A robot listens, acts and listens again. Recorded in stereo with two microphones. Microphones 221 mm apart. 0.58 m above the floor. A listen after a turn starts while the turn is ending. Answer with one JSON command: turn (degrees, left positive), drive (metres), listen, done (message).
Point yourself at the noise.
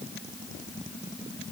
{"listen": true}
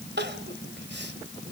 {"turn": -55}
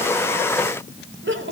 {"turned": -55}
{"turn": -70}
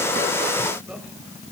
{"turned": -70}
{"listen": true}
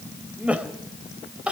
{"done": "Facing the crying, 2 to 4 m away."}